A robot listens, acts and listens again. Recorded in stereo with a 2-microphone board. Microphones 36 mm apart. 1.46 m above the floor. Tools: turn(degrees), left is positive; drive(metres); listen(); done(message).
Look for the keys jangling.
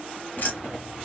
turn(degrees=60)
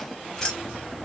turn(degrees=20)
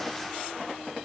listen()
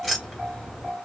done("Found it: keys jangling, straight ahead, 1 to 2 m away.")